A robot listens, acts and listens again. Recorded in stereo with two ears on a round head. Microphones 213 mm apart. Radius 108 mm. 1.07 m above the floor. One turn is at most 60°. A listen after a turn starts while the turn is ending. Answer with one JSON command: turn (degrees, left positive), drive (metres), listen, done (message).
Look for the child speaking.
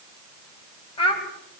{"turn": 20}
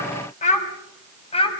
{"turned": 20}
{"turn": 25}
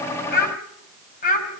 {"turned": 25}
{"turn": 35}
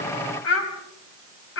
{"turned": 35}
{"turn": 60}
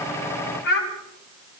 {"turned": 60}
{"turn": 45}
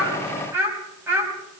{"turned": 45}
{"turn": -10}
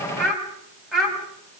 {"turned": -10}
{"done": "Facing the child speaking, over 4 m away."}